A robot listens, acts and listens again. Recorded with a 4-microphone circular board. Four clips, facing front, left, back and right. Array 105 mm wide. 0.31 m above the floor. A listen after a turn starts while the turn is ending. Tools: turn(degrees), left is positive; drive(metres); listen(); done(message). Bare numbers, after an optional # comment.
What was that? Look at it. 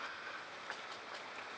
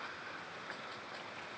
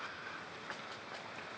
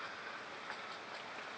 listen()
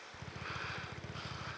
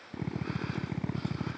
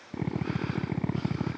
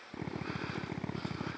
# The drill: straight behind.
turn(180)
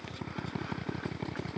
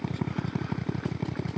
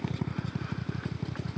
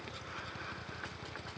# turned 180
# The drill is now 60° left.
turn(60)
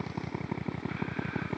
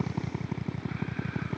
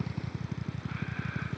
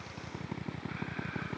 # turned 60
done("Facing the drill, 1 to 2 m away.")